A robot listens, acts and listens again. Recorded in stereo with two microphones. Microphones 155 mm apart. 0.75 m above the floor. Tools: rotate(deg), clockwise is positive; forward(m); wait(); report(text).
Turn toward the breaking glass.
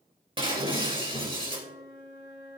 rotate(35)
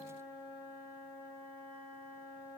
wait()
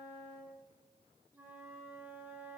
report("I heard breaking glass, but can't make it out now. It was about straight ahead or 110° right.")